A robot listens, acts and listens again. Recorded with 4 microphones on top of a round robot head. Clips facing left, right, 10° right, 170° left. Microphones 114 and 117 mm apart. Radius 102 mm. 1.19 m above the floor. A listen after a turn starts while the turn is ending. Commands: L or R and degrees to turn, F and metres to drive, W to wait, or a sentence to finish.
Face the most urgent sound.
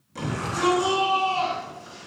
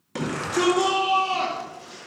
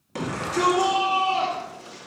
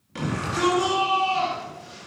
R65
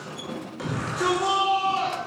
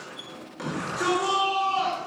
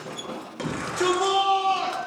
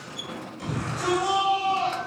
Facing the shout.